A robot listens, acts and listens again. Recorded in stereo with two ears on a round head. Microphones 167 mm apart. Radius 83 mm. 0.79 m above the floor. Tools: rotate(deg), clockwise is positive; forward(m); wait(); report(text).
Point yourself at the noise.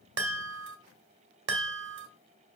rotate(65)
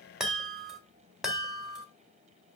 report("Found it: a chime, straight ahead.")